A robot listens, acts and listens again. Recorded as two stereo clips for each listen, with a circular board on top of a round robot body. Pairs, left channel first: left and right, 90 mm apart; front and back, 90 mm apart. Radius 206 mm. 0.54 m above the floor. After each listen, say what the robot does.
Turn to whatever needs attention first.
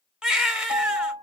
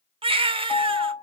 Turn 170° right.
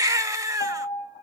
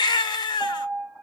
Turn 35° right.
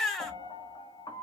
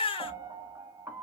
Facing the baby crying.